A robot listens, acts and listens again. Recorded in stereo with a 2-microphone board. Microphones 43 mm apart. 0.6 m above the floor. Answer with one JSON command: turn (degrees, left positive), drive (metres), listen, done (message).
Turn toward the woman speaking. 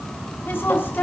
{"turn": 50}
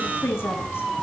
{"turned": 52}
{"turn": 75}
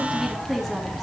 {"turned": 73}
{"done": "Found it: a woman speaking, straight ahead, over 4 m away."}